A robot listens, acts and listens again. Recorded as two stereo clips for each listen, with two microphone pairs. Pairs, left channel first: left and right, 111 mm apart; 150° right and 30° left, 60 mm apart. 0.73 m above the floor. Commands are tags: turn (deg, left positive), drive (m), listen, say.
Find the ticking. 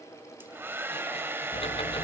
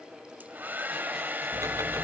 <turn deg="55"/>
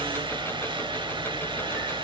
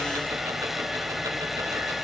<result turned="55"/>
<turn deg="20"/>
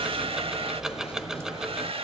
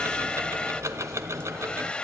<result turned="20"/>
<say>Facing the ticking.</say>